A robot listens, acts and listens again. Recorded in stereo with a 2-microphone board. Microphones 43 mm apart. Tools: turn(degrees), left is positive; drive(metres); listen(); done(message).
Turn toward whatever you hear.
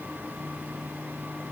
listen()
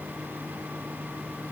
listen()
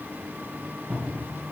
turn(degrees=-40)
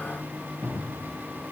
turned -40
turn(degrees=-100)
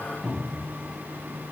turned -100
done("Found it: a cupboard door, straight ahead, 2 to 4 m away.")